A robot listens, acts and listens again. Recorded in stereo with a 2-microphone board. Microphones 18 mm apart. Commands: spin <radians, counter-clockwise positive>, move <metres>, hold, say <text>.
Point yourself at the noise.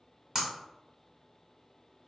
spin -0.44
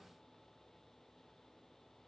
hold
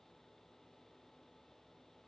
say I heard breaking glass, but can't make it out now. It was about straight ahead or 130° right.